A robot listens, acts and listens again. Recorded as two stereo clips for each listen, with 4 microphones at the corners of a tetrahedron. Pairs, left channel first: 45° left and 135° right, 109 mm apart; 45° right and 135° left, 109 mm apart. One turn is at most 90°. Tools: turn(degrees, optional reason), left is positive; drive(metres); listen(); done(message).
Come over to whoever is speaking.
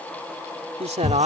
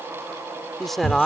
turn(degrees=-90, reason="The man speaking: 135° right.")
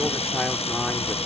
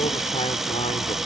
turn(degrees=-45, reason="Nothing new. It was at 45° right.")
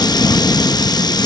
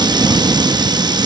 listen()
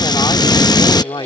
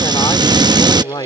drive(metres=1.0)
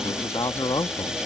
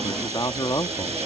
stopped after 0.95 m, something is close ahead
done("Arrived at the man speaking, straight ahead.")